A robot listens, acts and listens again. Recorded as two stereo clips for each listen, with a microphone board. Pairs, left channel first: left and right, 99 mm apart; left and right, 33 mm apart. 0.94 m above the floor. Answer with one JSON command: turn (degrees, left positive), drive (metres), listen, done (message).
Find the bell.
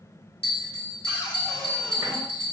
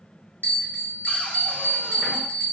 {"turn": 75}
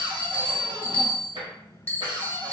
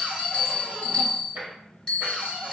{"turn": 20}
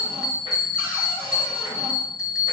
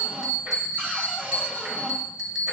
{"done": "Facing the bell, under 1 m away."}